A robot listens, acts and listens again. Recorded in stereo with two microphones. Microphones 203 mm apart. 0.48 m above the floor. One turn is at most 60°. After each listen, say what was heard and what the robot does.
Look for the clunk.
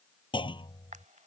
The clunk: about 25° left or 155° left. Turn 25° left.
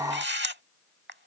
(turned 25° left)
Keep listening.
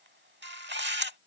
I heard a clunk, but can't make it out now. It was about straight ahead or 130° left.